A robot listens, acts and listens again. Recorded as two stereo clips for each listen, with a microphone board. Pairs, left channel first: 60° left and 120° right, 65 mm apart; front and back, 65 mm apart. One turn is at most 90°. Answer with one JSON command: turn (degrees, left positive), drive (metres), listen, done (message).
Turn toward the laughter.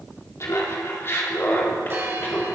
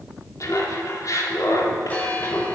{"done": "Facing the laughter, 2 to 4 m away."}